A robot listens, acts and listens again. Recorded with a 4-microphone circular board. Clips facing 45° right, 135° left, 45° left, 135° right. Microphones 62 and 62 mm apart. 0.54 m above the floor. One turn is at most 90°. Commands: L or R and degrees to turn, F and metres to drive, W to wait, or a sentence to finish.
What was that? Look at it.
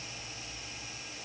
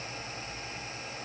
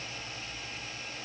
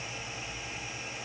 W
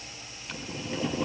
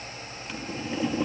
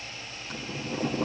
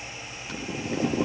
R90
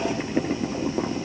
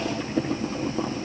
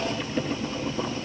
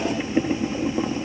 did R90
R80
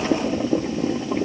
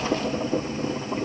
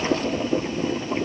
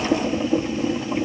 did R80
R30
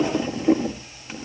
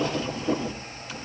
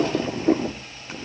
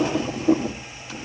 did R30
Facing the boiling, 2 to 4 m away.